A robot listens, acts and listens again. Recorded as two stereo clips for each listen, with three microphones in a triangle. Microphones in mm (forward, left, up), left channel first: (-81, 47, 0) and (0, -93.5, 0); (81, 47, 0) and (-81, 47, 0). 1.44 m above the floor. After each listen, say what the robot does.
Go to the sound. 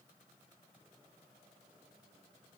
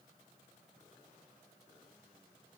Keep listening.
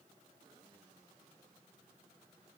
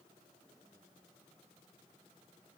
Keep listening.
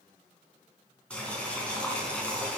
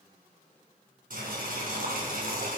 Turn 155° right.
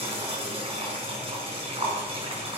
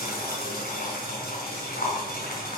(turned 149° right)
Turn 10° right.
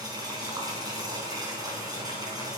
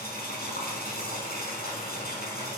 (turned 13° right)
Drive 1.0 m forward.
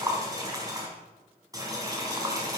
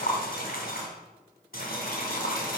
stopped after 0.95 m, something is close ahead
Something is in my way. I am facing the boiling but have not reached it.